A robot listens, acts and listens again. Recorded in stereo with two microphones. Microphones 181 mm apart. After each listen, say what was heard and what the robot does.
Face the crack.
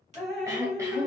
The crack: about 40° right or 140° right. Turn 40° right.
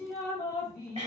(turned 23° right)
Keep listening.
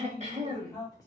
I heard a crack, but can't make it out now. It was about 15° right or 120° right.